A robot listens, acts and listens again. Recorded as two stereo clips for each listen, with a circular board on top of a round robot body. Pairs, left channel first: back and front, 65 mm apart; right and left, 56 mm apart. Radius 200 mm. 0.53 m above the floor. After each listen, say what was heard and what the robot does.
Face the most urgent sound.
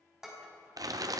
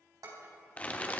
Keep listening.
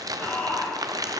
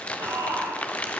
The shout: 115° left. Turn 115° left.
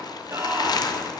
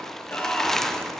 The shout is now 35° right. Turn 35° right.
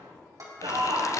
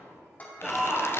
Found it: a shout, straight ahead.